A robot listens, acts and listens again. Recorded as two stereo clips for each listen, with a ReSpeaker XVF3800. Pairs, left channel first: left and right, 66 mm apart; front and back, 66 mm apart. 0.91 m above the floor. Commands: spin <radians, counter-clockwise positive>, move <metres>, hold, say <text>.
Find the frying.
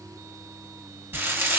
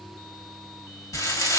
spin -0.61
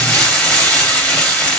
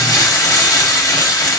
spin 0.26
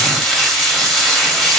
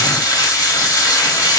say Facing the frying.